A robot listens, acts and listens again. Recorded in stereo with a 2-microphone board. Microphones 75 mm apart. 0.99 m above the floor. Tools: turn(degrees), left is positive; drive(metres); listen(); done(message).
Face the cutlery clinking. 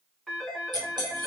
turn(degrees=-70)
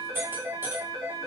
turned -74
turn(degrees=-35)
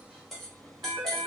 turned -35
done("Facing the cutlery clinking, 1 to 2 m away.")